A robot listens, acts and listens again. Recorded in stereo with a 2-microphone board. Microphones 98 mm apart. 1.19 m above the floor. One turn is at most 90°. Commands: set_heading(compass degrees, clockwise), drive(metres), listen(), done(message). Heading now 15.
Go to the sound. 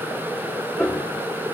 set_heading(345)
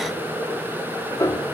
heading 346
set_heading(256)
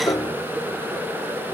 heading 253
set_heading(208)
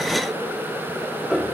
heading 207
drive(1.0)
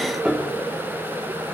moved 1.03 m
set_heading(217)
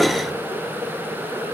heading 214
listen()
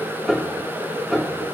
drive(1.0)
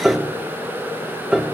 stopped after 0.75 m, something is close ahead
set_heading(224)
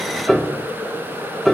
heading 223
done("Arrived at the piano, straight ahead.")